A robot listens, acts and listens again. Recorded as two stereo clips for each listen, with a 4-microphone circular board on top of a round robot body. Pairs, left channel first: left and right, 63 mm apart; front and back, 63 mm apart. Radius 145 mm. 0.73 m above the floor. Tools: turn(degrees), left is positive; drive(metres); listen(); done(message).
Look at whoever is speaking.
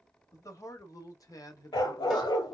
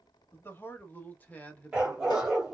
turn(degrees=70)
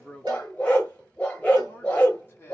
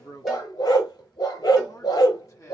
turn(degrees=35)
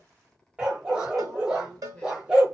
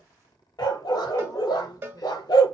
done("Found it: a man speaking, straight ahead.")